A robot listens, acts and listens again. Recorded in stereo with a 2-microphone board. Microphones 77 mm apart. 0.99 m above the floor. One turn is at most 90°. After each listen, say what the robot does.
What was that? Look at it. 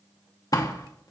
Turn 50° left.
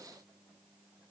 Keep listening.
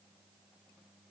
I heard a door slam, but can't make it out now. It was about straight ahead or 80° left.